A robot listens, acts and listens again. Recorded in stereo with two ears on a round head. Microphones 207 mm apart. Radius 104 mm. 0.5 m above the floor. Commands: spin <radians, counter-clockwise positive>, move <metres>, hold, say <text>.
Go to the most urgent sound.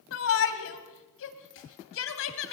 spin 1.05
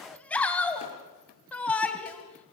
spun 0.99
move 1.0
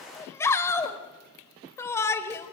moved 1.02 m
spin 0.17
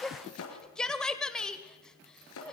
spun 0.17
move 1.0
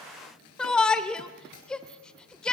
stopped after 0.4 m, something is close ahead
say Arrived at the shout, straight ahead.